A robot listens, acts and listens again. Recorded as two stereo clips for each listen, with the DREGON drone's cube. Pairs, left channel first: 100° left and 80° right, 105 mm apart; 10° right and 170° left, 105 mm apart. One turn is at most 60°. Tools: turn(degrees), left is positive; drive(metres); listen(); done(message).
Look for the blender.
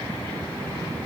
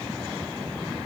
listen()
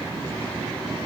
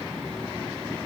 listen()
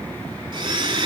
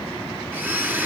turn(degrees=-60)
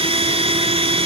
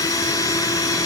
turn(degrees=-60)
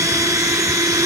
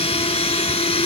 turn(degrees=-20)
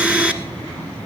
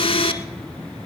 done("Found it: a blender, straight ahead, 1 to 2 m away.")